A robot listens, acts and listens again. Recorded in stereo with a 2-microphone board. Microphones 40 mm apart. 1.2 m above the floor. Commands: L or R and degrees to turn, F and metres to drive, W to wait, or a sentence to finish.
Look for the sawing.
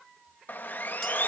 L50
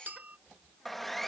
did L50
Facing the sawing.